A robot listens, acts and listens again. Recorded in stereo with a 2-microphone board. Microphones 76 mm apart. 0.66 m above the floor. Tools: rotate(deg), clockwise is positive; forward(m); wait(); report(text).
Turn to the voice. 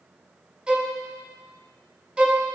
wait()
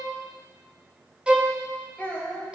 rotate(-15)
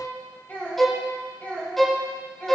rotate(-30)
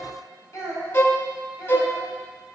rotate(-135)
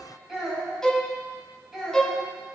report("Facing the child speaking, 2 to 4 m away.")